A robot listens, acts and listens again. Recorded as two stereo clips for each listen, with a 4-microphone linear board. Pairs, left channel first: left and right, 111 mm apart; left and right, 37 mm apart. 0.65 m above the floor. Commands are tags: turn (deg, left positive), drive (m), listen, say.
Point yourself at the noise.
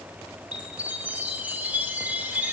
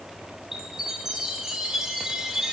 <turn deg="-30"/>
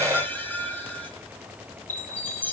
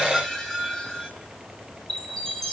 <turn deg="15"/>
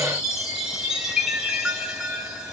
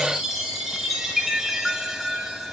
<say>Facing the chime.</say>